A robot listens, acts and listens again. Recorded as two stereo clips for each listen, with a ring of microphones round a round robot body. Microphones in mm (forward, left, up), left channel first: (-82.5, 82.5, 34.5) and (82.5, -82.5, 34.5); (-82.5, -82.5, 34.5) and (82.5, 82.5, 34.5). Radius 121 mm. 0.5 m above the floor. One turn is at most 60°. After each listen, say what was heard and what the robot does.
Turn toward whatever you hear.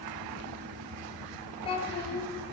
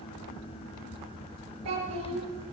The child speaking: 65° left. Turn 60° left.
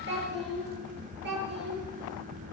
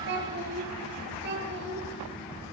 Found it: a child speaking, straight ahead, over 4 m away.